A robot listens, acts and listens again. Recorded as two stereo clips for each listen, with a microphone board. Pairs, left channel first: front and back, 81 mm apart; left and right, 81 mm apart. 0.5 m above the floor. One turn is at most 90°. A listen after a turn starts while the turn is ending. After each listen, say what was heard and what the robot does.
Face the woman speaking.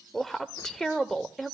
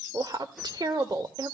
The woman speaking: 80° right. Turn 80° right.
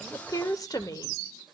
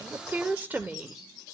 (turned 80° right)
The woman speaking is now 25° right. Turn 25° right.
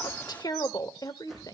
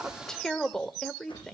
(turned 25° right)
The woman speaking is now 10° left. Turn 10° left.
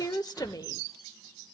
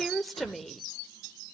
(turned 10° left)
Facing the woman speaking, 1 to 2 m away.